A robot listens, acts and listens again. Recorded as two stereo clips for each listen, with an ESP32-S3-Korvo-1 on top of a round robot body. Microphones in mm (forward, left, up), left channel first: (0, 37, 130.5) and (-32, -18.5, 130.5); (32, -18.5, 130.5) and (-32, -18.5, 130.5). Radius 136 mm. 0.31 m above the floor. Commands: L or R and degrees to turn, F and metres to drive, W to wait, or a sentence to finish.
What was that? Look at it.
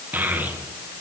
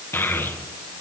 R55
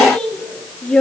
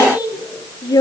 R15
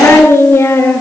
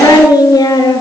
L10
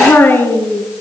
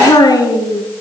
Facing the child speaking, over 4 m away.